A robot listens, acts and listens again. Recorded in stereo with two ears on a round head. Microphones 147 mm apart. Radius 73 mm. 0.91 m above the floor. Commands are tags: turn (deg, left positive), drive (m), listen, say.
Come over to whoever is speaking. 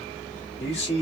<turn deg="40"/>
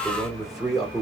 <drive m="1.0"/>
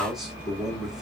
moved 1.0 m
<drive m="1.0"/>
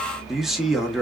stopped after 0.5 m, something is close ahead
<say>Arrived at the man speaking, straight ahead.</say>